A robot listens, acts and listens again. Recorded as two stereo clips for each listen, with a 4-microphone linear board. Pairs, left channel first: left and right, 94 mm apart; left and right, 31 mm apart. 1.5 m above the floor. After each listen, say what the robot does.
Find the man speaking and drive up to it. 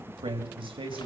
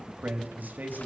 Turn 65° right.
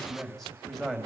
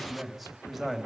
Drive 1.0 m forward.
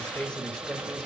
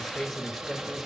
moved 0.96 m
Drive 1.0 m forward.
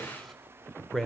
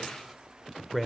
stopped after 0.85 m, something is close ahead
Arrived at the man speaking, straight ahead.